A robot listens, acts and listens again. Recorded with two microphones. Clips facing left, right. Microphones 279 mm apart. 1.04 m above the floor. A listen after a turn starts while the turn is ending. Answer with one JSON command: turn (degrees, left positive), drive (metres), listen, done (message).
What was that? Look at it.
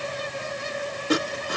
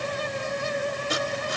{"turn": 65}
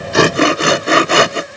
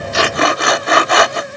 {"turn": 35}
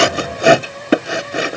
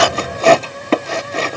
{"turn": 15}
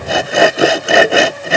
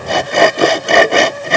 {"done": "Found it: sawing, straight ahead."}